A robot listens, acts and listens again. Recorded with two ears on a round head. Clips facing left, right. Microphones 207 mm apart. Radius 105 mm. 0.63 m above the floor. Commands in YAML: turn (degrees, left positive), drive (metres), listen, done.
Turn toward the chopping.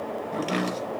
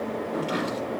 turn: 40
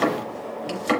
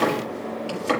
done: "Facing the chopping, over 4 m away."